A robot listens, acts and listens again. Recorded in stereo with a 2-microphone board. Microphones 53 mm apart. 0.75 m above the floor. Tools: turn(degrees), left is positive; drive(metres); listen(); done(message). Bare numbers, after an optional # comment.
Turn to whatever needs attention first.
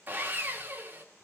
listen()
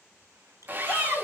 # The shout: about 25° left or 155° left.
turn(25)
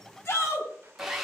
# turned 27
# So it is at 125° left.
turn(125)
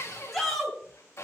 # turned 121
done("Found it: a shout, straight ahead.")